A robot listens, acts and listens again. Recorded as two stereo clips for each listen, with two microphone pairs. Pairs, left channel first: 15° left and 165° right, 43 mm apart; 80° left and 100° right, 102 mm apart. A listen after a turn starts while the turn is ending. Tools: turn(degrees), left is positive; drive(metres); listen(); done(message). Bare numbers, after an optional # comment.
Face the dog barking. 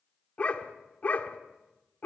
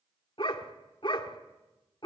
# The dog barking: 50° left.
turn(50)
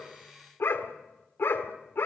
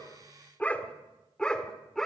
done("Facing the dog barking.")